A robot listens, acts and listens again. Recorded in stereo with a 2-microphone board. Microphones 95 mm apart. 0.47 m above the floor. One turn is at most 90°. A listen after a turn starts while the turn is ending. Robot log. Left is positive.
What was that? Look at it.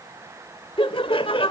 note: The laughter: about 60° left or 120° left.
cmd yaw +60
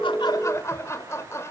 note: So it is at 35° left.
cmd yaw +35
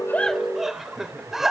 end: Facing the laughter.